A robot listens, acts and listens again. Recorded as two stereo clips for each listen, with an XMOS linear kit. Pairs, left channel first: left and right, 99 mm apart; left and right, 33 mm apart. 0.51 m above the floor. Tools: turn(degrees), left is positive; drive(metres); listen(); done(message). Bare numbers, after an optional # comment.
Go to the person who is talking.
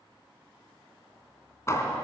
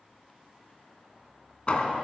listen()
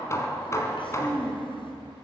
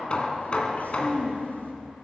# The child speaking: about 60° left or 120° left.
turn(60)
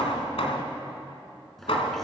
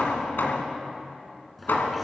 drive(1.0)
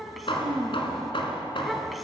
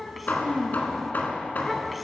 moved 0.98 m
drive(1.0)
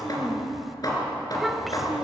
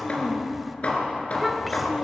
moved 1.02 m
drive(1.0)
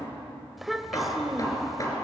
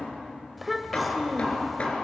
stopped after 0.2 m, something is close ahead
done("I am next to the child speaking.")